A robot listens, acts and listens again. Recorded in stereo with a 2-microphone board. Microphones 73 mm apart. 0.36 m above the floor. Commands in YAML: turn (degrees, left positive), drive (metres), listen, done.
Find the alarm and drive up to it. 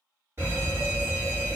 turn: -40
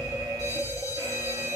turn: -90
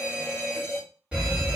turn: -15
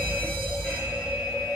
drive: 1.0
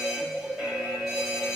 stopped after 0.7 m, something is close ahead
done: "I am next to the alarm."